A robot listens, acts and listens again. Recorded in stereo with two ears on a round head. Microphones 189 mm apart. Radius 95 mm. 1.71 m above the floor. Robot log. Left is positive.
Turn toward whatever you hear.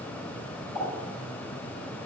note: The pop: about 20° left or 160° left.
cmd yaw +20
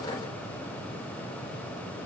cmd idle
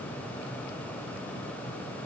end: I heard a pop, but can't make it out now. It was about straight ahead or 140° left.